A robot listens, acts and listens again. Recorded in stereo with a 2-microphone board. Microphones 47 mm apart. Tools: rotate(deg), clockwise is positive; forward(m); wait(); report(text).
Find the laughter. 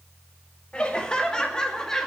rotate(-30)
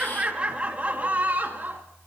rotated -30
rotate(45)
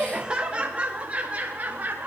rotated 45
rotate(40)
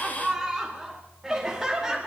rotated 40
rotate(10)
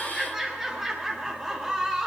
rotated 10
report("Facing the laughter.")